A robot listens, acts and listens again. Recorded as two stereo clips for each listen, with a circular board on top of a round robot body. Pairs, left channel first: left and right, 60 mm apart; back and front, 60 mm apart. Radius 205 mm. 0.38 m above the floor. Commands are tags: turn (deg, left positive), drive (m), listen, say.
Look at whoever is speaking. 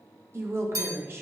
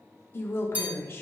<turn deg="-135"/>
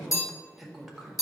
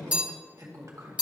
<say>Found it: a woman speaking, straight ahead.</say>